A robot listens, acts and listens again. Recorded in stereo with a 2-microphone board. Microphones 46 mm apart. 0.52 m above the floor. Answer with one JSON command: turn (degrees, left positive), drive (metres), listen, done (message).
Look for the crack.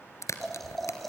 {"turn": 90}
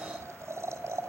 {"done": "Facing where the crack came from. I can't hear it now."}